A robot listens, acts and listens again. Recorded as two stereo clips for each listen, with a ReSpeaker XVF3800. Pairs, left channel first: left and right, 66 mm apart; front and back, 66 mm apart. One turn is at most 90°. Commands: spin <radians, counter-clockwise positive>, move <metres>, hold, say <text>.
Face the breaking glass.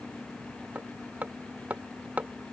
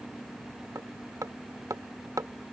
hold
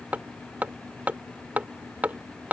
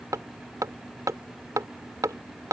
hold
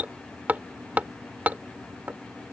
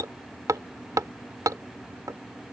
say I can't make out breaking glass, only hammering.